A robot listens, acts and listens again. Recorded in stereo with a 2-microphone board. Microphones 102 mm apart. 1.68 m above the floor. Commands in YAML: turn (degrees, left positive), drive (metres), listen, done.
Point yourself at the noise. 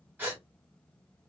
turn: -15
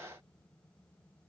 listen: true
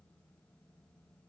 done: "I heard a gasp, but can't make it out now. It was about straight ahead or 150° right."